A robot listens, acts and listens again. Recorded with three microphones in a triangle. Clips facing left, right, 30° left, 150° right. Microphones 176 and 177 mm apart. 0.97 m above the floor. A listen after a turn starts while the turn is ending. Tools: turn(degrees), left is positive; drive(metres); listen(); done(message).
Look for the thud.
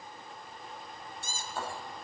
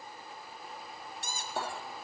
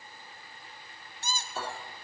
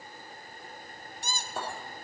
turn(degrees=-115)
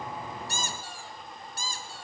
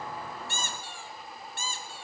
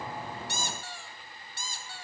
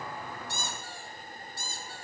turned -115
done("Facing where the thud came from. I can't hear it now.")